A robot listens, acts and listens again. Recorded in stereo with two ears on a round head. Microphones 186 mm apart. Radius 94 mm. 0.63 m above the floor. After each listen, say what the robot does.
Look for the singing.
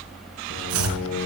Turn 90° left.
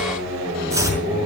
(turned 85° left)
Turn 10° right.
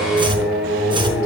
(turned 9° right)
Facing the singing, over 4 m away.